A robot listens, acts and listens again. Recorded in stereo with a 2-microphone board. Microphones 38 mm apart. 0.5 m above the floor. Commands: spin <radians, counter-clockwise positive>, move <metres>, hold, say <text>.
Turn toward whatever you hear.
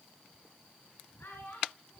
spin 1.22
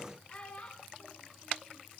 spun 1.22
spin 0.61
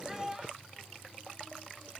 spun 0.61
spin -0.17
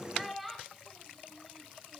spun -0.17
say Facing the child speaking.